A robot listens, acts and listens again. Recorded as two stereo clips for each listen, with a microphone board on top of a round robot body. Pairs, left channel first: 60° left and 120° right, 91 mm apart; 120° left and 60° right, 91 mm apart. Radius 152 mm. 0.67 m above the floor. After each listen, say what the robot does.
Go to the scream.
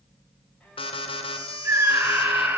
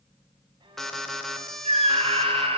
Turn 50° right.
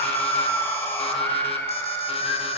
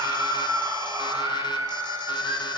Drive 1.0 m forward.
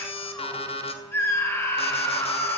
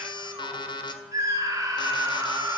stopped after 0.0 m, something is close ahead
Something is in my way. I am facing the scream but have not reached it.